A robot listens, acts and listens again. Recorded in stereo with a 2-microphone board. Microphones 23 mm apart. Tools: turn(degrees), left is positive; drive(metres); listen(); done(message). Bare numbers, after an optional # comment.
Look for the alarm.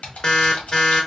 # The alarm: about 30° left or 150° left.
turn(30)
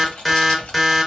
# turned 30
done("Found it: an alarm, straight ahead, under 1 m away.")